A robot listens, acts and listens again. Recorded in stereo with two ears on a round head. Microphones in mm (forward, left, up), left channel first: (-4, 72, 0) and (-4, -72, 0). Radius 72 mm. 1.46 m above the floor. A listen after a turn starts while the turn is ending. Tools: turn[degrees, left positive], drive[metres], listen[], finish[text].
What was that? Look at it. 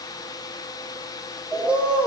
Action: turn[-30]
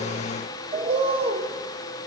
Thought: So it is at 145° right.
Action: turn[-145]
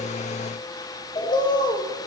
Thought: The bird is now 25° left.
Action: turn[25]
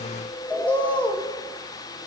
Thought: The bird is now 10° left.
Action: turn[10]
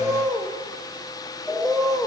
Action: finish[Facing the bird.]